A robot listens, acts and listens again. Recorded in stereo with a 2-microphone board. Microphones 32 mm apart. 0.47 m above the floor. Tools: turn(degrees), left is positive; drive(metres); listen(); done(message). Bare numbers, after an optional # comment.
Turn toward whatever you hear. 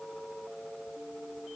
listen()
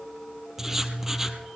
# The writing: about 15° right or 165° right.
turn(-15)
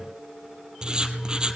# So it is at 150° right.
turn(-150)
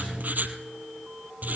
# The writing is now 75° right.
turn(-75)
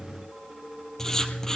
# The writing is now 20° left.
turn(20)
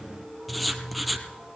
done("Found it: writing, straight ahead.")